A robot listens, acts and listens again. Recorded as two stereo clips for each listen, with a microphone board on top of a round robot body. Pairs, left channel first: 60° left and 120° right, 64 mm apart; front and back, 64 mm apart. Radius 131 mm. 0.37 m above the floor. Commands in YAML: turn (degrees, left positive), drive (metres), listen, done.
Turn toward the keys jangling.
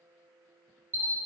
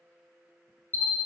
listen: true
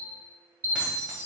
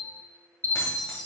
turn: -50
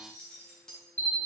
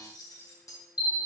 turn: -20
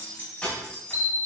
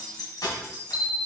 turn: -10
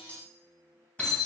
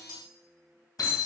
turn: -10
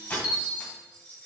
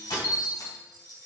done: "Facing the keys jangling."